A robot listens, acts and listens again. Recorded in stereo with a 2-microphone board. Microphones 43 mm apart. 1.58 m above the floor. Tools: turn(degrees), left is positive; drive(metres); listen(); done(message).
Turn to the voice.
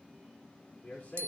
turn(degrees=40)
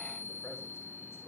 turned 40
listen()
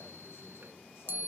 listen()
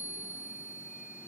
done("I heard a man speaking, but can't make it out now. It was about straight ahead or 100° left.")